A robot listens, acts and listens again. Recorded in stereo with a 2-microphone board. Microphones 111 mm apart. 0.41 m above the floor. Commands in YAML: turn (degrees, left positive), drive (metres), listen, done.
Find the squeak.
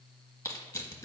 listen: true
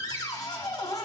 listen: true
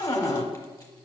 done: "I can't make out a squeak, only a cupboard door and crushing."